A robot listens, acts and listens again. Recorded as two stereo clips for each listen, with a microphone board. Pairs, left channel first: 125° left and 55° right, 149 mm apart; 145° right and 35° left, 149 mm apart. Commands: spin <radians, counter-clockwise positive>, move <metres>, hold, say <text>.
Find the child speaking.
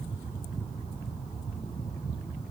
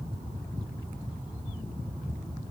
hold
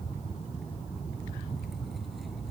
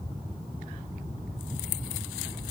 hold
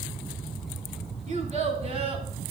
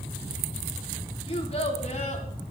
spin -1.83
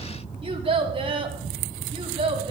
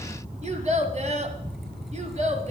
say Facing the child speaking.